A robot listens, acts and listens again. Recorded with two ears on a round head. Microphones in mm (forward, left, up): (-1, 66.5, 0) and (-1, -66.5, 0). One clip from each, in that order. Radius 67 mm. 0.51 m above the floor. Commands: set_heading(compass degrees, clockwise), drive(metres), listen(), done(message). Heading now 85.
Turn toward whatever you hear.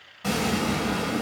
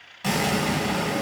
set_heading(120)
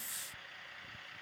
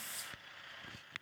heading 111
listen()
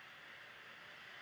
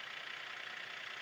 done("I heard an explosion, but can't make it out now. It was about 10° right or 120° right.")